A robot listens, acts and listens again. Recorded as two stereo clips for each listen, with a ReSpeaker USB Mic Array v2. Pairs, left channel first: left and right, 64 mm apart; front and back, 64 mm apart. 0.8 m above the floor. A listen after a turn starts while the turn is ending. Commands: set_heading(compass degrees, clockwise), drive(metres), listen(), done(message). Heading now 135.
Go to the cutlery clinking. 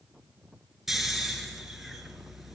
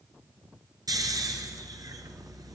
listen()
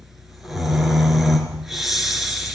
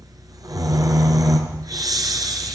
listen()
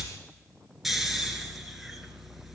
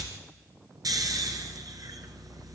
done("I can't make out cutlery clinking, only snoring.")